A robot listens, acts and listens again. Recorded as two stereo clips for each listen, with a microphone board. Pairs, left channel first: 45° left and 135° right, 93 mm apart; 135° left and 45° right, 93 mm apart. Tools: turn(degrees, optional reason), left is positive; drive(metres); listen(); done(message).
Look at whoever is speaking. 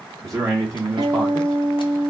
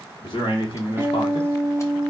turn(degrees=175, reason="The man speaking: 175° left.")
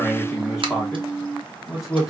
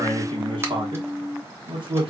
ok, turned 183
turn(degrees=-10, reason="The man speaking is now 10° right.")
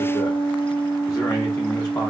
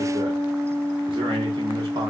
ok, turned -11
listen()
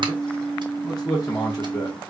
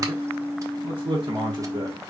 done("Facing the man speaking, 1 to 2 m away.")